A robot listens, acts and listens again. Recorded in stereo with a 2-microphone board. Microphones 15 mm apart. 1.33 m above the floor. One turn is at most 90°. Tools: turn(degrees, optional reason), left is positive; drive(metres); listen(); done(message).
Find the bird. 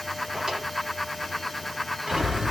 turn(degrees=-50, reason="The bird: about 50° right or 130° right.")
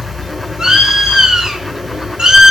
turn(degrees=-70, reason="So it is at 70° right.")
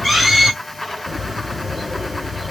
turn(degrees=-10, reason="The bird is now 10° right.")
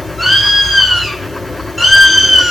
done("Facing the bird.")